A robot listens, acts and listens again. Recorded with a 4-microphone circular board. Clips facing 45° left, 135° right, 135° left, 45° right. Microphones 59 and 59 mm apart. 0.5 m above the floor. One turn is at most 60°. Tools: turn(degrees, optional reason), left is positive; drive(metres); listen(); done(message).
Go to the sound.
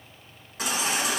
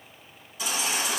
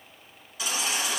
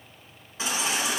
turn(degrees=15, reason="The baby crying: 15° left.")
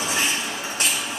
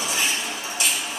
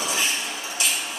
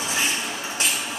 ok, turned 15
drive(metres=1.0)
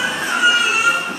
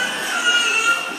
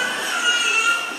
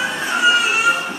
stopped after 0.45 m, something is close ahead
done("Something is in my way. I am facing the baby crying but have not reached it.")